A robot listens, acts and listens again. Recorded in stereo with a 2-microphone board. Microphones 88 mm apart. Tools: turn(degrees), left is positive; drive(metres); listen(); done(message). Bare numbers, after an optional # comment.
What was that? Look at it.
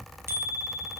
# The bicycle bell: about 30° right or 150° right.
turn(-30)
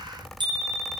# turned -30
# So it is at 120° right.
turn(-120)
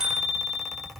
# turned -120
done("Facing the bicycle bell.")